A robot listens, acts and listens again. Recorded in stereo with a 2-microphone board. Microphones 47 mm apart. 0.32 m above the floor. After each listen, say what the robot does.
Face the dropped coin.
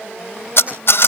Keep listening.
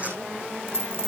Turn 55° right.
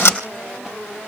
Keep listening.
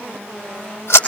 I heard a dropped coin, but can't make it out now. It was about straight ahead or 70° right.